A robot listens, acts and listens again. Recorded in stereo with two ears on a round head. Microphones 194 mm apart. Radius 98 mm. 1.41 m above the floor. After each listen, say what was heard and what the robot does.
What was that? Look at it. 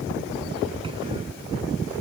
Keep listening.
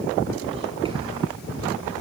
Keep listening.
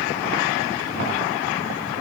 I can't make out anything to turn to.